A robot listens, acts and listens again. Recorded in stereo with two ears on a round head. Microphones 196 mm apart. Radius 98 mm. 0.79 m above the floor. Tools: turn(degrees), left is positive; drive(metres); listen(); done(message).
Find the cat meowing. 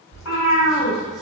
turn(degrees=90)
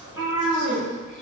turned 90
turn(degrees=-15)
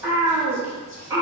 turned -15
turn(degrees=-15)
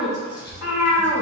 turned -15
turn(degrees=-10)
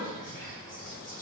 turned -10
listen()
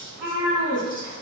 turn(degrees=-10)
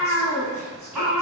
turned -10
done("Facing the cat meowing, 2 to 4 m away.")